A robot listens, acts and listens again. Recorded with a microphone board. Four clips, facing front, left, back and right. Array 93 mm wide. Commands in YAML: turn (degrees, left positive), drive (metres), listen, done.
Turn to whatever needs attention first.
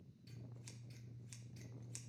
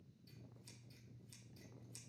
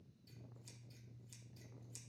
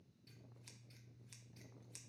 listen: true
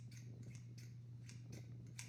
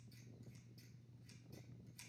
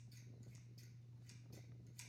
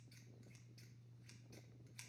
listen: true
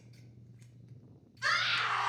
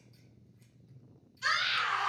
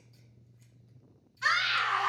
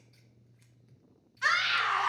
turn: -100
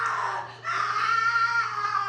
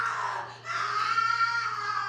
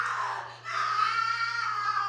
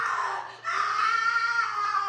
turn: -20
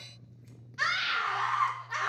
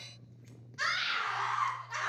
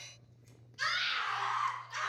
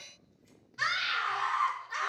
done: "Facing the scream."